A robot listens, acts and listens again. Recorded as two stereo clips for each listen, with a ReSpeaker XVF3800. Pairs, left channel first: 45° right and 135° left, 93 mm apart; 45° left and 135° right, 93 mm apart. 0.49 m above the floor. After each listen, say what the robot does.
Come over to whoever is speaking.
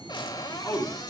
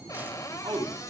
Turn 100° right.
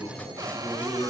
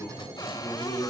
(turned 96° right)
Drive 1.0 m forward.
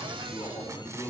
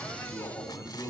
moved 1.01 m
Turn 10° right.
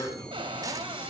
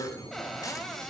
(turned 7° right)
Drive 1.0 m forward.
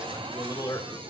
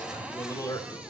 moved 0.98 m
Drive 1.0 m forward.
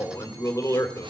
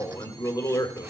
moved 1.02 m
Drive 1.0 m forward.
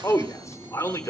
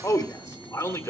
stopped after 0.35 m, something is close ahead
Arrived at the man speaking, straight ahead.